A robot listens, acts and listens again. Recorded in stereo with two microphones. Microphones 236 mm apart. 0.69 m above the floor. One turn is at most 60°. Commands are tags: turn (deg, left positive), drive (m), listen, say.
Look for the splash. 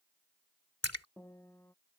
<turn deg="60"/>
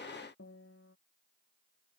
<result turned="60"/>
<turn deg="30"/>
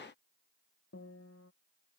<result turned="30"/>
<say>I heard a splash from this way, but can't make it out now.</say>